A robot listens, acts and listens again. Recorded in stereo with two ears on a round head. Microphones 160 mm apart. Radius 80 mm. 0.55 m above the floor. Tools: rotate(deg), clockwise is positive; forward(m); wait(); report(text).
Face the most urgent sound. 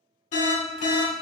rotate(-40)
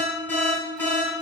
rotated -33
rotate(-15)
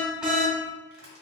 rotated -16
report("Facing the alarm.")